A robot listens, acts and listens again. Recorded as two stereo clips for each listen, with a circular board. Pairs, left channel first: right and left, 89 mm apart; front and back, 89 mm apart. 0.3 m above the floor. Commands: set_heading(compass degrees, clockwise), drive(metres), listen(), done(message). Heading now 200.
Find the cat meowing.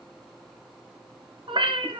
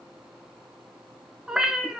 set_heading(110)
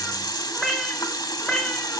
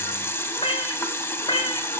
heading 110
set_heading(120)
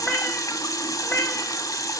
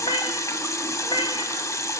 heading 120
set_heading(140)
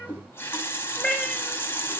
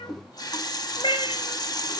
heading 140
set_heading(150)
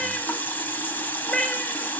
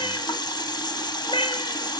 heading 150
done("Facing the cat meowing, 2 to 4 m away.")